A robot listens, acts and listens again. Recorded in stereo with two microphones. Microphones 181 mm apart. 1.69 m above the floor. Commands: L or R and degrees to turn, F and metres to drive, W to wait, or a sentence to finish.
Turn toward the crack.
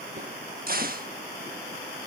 R55
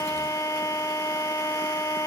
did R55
W
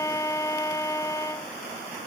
I heard a crack, but can't make it out now. It was about straight ahead or 70° right.